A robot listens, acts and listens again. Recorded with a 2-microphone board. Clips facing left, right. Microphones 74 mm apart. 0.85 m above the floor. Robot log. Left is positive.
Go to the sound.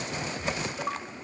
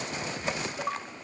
cmd idle
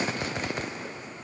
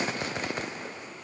cmd idle
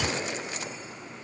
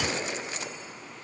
end: I can't make out anything.